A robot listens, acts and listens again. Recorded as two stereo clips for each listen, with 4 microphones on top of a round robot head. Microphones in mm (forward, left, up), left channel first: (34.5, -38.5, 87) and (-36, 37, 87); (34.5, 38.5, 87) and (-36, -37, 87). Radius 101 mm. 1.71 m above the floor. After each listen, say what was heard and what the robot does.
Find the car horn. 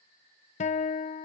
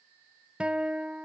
Keep listening.
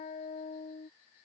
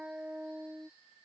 Keep listening.
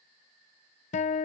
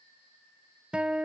I can't make out a car horn, only a guitar.